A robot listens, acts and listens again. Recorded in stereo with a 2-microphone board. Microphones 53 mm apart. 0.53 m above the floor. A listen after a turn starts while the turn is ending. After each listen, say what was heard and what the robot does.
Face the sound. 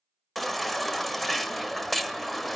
Turn 30° left.
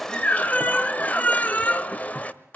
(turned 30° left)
So it is at 145° left. Turn 145° left.
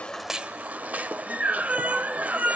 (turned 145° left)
The baby crying is now 30° right. Turn 30° right.
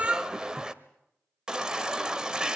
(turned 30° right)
The baby crying is now 15° right. Turn 15° right.
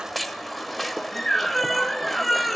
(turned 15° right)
Facing the baby crying, 1 to 2 m away.